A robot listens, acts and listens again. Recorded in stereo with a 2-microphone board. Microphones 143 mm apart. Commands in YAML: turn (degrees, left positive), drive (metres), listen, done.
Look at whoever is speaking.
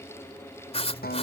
listen: true
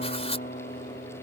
listen: true
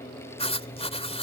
done: "I can't make out anyone speaking, only writing and a guitar."